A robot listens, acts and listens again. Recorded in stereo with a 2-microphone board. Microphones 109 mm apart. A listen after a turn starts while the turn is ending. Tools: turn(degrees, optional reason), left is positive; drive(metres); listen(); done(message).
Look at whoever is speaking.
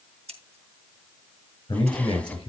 turn(degrees=45, reason="The man speaking: about 45° left or 135° left.")
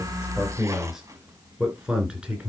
turn(degrees=-10, reason="So it is at 10° right.")
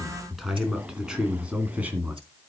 turn(degrees=-15, reason="The man speaking is now 15° right.")
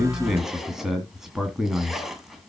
done("Found it: a man speaking, straight ahead, 2 to 4 m away.")